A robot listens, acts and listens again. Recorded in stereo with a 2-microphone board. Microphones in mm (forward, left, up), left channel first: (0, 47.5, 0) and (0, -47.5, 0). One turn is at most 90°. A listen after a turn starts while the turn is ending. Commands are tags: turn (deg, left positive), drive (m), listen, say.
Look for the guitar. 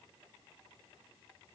<listen/>
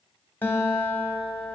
<turn deg="20"/>
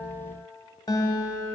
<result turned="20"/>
<turn deg="90"/>
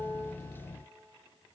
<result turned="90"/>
<turn deg="50"/>
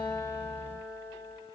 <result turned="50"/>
<turn deg="30"/>
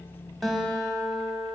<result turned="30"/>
<say>Facing the guitar, under 1 m away.</say>